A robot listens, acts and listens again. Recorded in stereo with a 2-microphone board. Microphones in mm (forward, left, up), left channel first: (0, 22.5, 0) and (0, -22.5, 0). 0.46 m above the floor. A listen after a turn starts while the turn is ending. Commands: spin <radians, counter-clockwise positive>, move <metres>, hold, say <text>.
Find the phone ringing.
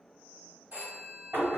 spin -0.61
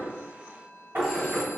hold
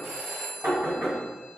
say Facing the phone ringing, 1 to 2 m away.